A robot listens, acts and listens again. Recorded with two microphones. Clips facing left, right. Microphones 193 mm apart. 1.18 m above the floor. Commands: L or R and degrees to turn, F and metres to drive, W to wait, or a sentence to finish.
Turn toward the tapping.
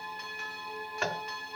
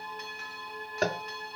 R40
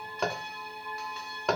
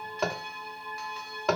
Found it: tapping, straight ahead.